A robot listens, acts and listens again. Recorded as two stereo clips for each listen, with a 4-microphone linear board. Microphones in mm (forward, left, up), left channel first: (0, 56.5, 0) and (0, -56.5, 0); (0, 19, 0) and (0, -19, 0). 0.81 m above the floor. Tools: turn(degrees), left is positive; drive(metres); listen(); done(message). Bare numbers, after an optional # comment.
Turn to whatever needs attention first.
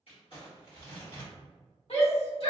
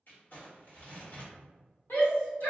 # The shout: about 60° left or 120° left.
turn(60)
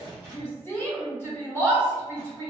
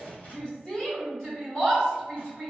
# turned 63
# So it is at 25° left.
turn(25)
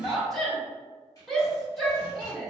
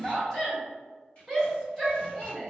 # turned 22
done("Facing the shout, 1 to 2 m away.")